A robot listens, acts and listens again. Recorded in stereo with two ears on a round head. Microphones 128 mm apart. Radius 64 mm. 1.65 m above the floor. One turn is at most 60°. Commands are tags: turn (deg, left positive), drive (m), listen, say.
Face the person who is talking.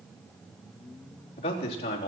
<turn deg="45"/>
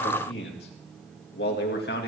<turn deg="60"/>
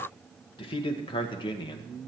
<turn deg="35"/>
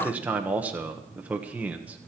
<turn deg="-10"/>
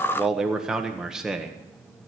<say>Facing the man speaking, 1 to 2 m away.</say>